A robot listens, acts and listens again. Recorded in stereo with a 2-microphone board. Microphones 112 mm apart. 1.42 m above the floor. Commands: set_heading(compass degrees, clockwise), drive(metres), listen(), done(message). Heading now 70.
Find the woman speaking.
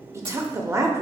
set_heading(95)
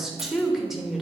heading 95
done("Facing the woman speaking, under 1 m away.")